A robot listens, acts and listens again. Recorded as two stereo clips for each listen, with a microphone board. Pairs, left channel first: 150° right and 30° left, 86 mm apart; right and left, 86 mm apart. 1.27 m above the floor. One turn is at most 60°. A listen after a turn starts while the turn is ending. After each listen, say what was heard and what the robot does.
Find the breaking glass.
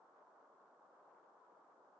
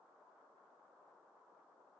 Keep listening.
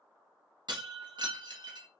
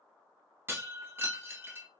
The breaking glass: 30° left. Turn 30° left.
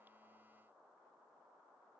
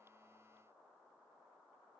Facing where the breaking glass came from. I can't hear it now.